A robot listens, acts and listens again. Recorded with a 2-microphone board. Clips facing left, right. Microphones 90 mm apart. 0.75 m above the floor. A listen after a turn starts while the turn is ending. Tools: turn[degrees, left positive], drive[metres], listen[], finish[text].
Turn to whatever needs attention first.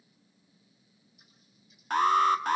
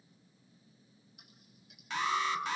Thought: The alarm: about 50° left or 130° left.
Action: turn[50]
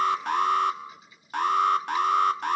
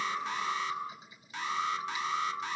Thought: So it is at 70° left.
Action: turn[70]
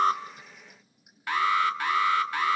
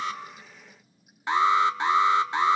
Thought: The alarm is now 25° right.
Action: turn[-25]
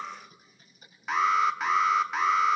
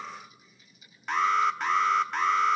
Action: finish[Facing the alarm, 1 to 2 m away.]